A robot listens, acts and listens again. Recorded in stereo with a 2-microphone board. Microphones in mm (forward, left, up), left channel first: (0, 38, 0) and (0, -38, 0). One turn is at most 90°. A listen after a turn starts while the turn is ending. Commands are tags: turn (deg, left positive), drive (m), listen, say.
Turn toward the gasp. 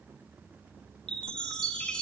<listen/>
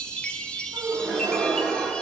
<turn deg="-60"/>
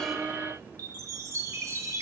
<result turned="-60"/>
<listen/>
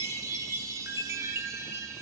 <say>I heard a gasp, but can't make it out now. It was about straight ahead or 60° right.</say>